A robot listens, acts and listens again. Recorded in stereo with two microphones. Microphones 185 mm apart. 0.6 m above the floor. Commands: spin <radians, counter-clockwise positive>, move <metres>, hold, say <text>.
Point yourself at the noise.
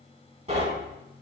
spin -0.61
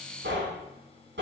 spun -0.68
spin -1.83
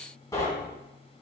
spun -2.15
spin 0.35
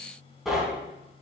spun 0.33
say Found it: knocking, straight ahead.